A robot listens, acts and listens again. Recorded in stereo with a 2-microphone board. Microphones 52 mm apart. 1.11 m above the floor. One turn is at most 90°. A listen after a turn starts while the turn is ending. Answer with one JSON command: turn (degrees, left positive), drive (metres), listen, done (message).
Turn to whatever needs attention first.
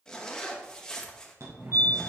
{"turn": -55}
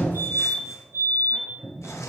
{"turn": -50}
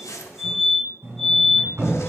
{"done": "Facing the fire alarm, 1 to 2 m away."}